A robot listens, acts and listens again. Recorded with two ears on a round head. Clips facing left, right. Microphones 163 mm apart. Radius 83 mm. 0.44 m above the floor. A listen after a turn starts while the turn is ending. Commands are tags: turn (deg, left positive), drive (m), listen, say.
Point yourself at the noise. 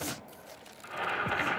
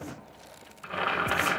<turn deg="-65"/>
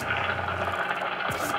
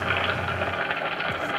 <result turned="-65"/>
<turn deg="-25"/>
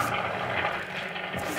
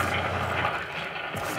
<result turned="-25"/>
<turn deg="10"/>
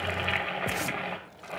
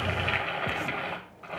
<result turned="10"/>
<say>Found it: boiling, straight ahead.</say>